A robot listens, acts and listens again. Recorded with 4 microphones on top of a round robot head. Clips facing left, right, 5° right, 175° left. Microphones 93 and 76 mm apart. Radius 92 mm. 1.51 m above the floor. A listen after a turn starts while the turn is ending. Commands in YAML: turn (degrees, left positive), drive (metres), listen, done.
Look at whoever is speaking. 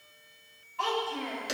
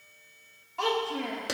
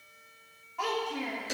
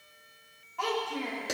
turn: -90
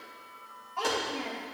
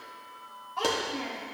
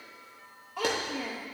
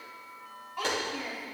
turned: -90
done: "Found it: a child speaking, straight ahead, 1 to 2 m away."